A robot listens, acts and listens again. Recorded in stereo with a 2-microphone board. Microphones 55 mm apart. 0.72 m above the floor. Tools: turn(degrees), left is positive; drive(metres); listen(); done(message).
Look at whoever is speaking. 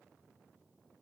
listen()
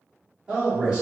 turn(degrees=-20)
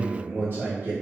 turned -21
turn(degrees=-140)
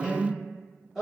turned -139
done("Found it: a man speaking, straight ahead.")